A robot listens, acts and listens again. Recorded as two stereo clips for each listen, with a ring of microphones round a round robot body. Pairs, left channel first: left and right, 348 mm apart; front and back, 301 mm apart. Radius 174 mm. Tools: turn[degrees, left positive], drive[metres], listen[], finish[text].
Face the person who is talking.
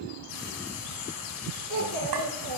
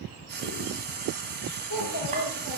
Thought: The child speaking: 50° right.
Action: turn[-50]
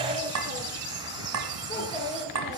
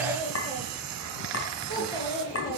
Thought: The child speaking is now 15° left.
Action: turn[15]
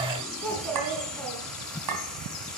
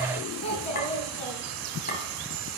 Action: finish[Facing the child speaking.]